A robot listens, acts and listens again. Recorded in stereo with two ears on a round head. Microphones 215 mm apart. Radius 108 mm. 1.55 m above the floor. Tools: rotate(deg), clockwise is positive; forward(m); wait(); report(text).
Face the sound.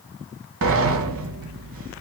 rotate(60)
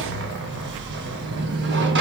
rotate(50)
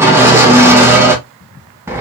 rotate(10)
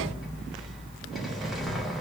report("Facing the sliding door.")